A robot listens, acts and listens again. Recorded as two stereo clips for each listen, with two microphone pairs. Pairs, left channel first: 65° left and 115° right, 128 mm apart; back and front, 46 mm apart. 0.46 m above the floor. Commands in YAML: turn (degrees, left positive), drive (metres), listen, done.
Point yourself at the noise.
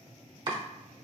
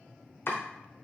turn: -155
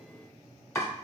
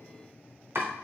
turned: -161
done: "Found it: chopping, straight ahead."